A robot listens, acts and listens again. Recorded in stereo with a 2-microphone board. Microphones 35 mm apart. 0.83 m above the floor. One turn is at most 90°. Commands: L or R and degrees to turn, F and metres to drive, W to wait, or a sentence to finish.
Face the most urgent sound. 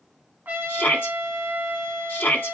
L65
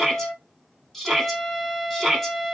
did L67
Facing the shout.